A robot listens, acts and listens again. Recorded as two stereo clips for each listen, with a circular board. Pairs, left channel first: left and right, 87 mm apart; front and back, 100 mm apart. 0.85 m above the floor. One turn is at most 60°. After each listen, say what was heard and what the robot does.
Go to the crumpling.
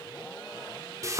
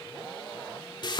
Keep listening.
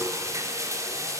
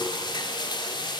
Keep listening.
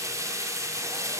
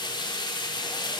I can't make out crumpling to turn to.